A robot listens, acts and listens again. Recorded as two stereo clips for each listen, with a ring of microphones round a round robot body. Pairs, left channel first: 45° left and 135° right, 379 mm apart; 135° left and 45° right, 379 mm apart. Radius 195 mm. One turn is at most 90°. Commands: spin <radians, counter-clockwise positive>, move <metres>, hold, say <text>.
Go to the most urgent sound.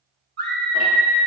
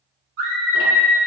spin -1.40
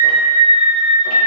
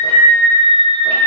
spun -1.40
spin -0.44
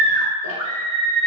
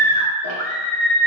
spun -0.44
move 1.0
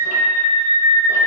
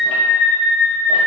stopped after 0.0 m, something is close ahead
say Blocked. The scream is further on, straight ahead.